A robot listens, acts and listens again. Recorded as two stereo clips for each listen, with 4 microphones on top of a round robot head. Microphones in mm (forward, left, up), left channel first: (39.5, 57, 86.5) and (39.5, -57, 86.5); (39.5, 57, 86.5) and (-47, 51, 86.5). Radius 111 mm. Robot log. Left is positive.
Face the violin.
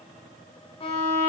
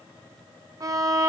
note: The violin: 130° left.
cmd yaw +130
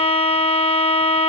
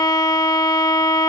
note: The violin is now 50° left.
cmd yaw +50
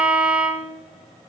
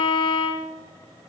end: Facing the violin, 1 to 2 m away.